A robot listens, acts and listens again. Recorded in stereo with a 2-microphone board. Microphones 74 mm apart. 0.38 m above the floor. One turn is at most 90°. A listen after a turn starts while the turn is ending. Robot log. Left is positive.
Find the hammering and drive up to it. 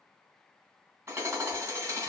note: The hammering: about 35° right or 145° right.
cmd yaw -35
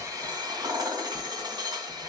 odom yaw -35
note: So it is at 105° right.
cmd yaw -90
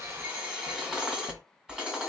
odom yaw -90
note: The hammering is now 10° right.
cmd yaw -10
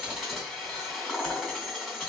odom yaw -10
cmd fwd 1.0
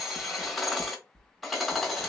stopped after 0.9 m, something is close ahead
end: Arrived at the hammering, straight ahead.